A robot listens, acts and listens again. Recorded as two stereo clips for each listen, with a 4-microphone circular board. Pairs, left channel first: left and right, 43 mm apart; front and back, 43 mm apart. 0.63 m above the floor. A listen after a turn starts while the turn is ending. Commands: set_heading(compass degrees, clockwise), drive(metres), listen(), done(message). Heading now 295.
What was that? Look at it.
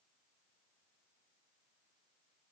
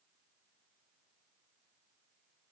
listen()
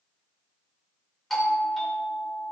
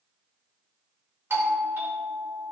set_heading(120)
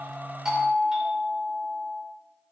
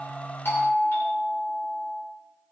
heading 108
set_heading(123)
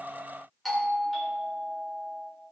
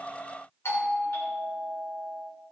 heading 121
done("Facing the doorbell.")